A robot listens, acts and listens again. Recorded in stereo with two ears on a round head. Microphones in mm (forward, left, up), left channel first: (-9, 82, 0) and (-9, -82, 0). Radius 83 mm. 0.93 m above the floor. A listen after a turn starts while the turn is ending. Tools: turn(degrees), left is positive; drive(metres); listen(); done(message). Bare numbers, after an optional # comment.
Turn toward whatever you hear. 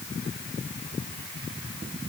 listen()
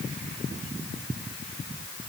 listen()
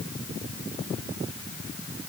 done("I can't make out anything to turn to.")